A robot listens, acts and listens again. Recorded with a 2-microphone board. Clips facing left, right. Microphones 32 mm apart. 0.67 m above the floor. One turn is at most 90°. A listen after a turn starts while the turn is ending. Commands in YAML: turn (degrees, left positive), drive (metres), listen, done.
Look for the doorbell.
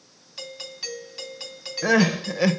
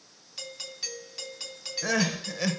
turn: 30
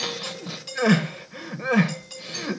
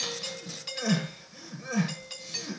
turn: -20
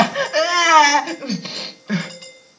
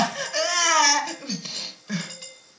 done: "Facing the doorbell, 2 to 4 m away."